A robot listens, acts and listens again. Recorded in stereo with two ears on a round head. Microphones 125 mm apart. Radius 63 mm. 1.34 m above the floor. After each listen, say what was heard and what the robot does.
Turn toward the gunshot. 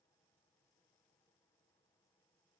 Keep listening.
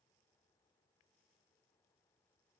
Keep listening.
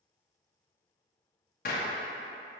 The gunshot: about 65° left or 115° left. Turn 65° left.
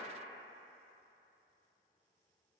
Keep listening.
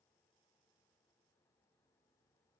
I heard a gunshot, but can't make it out now. It was about straight ahead or 50° left.